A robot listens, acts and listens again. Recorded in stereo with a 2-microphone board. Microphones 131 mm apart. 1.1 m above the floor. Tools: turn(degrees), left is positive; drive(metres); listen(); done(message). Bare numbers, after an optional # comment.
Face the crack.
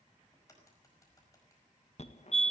# The crack: about 25° left or 155° left.
turn(25)
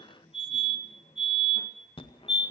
listen()
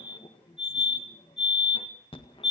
done("I heard a crack, but can't make it out now. It was about straight ahead or 130° left.")